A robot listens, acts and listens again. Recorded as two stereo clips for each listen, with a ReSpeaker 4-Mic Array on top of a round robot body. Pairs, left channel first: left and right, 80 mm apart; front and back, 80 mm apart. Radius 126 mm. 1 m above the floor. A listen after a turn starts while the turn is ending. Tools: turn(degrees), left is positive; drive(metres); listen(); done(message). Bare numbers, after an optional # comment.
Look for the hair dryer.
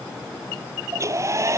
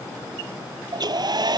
# The hair dryer: 145° right.
turn(-145)
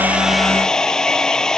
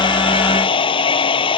# The hair dryer is now 10° left.
turn(10)
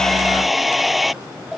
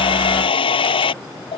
done("Found it: a hair dryer, straight ahead.")